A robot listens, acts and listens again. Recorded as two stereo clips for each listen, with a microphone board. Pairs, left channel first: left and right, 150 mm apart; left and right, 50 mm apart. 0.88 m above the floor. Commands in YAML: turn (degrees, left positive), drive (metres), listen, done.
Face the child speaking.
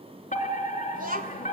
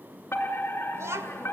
turn: -65
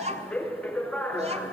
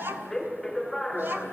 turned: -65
turn: -45
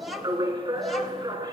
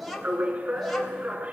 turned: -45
done: "Facing the child speaking."